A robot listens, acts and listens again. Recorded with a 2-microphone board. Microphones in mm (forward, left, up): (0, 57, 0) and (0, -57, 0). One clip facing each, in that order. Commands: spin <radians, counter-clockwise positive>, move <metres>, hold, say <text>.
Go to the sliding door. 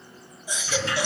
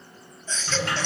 spin -1.05
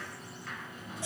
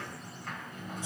spin -0.96
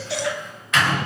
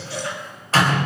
spin -0.70
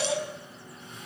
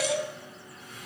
hold
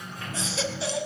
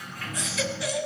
spin 0.44
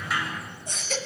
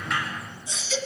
move 1.0
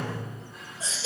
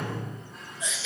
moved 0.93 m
move 1.0
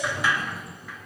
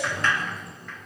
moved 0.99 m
spin 0.17
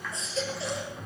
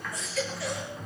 move 1.0
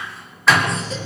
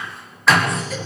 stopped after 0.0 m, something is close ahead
say Arrived at the sliding door, straight ahead.